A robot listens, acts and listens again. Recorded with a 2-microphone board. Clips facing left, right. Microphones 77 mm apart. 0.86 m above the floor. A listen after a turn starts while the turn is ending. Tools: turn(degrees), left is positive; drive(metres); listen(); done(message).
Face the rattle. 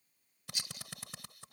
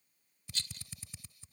turn(degrees=30)
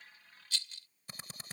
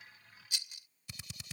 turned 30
turn(degrees=-15)
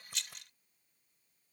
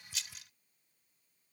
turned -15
done("Facing the rattle.")